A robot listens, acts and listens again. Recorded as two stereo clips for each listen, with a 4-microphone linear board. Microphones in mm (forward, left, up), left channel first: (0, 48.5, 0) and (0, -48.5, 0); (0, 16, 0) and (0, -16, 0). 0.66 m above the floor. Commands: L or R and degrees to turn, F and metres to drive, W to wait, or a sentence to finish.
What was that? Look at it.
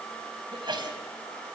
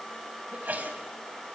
R55
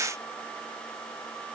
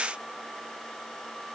W
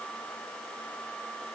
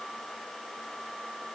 I heard a sneeze, but can't make it out now. It was about straight ahead or 70° right.